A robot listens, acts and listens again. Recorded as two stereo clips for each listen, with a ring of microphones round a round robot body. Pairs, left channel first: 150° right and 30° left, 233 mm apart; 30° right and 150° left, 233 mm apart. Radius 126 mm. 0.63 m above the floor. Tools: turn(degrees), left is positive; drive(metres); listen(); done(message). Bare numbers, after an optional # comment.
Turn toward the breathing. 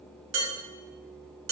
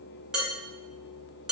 listen()
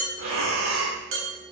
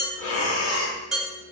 done("Found it: breathing, straight ahead, 1 to 2 m away.")